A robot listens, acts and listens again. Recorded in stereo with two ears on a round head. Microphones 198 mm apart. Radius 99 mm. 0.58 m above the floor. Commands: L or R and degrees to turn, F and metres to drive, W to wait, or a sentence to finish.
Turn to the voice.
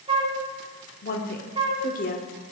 L40
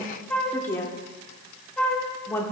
L10
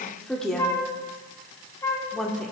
Facing the woman speaking.